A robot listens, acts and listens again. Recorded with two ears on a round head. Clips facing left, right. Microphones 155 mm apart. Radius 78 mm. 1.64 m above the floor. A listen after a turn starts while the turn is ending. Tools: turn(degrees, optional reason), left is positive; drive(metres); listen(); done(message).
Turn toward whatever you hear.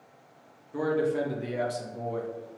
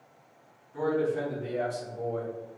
turn(degrees=90)
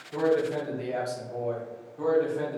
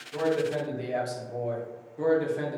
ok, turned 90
turn(degrees=-15, reason="So it is at 15° right.")
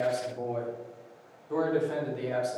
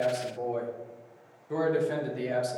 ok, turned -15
turn(degrees=-20, reason="The man speaking is now 20° right.")
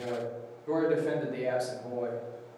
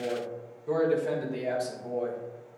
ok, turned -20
done("Found it: a man speaking, straight ahead.")